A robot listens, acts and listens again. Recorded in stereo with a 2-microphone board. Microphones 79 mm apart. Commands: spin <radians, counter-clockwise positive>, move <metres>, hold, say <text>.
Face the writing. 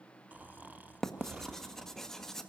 spin 0.52
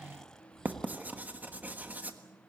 spin -0.44
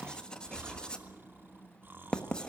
spin 0.26
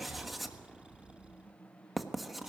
say Facing the writing, 1 to 2 m away.